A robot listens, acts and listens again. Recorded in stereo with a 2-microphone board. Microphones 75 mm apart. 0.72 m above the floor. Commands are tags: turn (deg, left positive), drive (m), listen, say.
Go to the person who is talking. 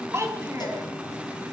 <turn deg="-40"/>
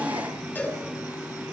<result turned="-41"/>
<listen/>
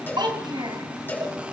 <turn deg="-100"/>
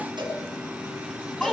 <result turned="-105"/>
<drive m="1.0"/>
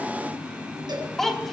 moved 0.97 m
<drive m="1.0"/>
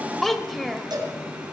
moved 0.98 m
<drive m="1.0"/>
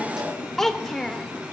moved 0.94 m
<drive m="1.0"/>
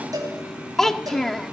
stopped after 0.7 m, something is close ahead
<say>Arrived at the child speaking, straight ahead.</say>